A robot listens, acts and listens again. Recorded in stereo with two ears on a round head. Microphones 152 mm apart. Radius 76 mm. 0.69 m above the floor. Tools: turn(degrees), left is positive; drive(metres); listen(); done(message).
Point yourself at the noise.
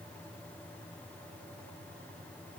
listen()
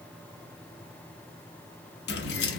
turn(degrees=70)
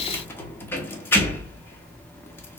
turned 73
turn(degrees=15)
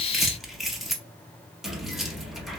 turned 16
done("Found it: keys jangling, straight ahead.")